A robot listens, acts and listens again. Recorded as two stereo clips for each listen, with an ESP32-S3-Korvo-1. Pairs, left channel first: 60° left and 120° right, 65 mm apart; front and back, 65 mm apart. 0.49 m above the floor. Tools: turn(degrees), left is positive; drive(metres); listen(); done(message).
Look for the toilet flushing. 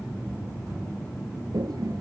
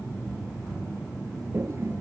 turn(degrees=-130)
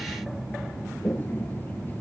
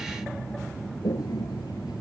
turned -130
done("Found it: a toilet flushing, straight ahead.")